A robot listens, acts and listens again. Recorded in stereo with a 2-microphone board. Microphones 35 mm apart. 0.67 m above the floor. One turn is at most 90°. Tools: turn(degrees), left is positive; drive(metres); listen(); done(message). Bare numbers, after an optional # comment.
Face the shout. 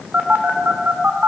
listen()
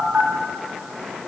listen()
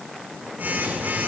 done("I can't make out a shout to turn to.")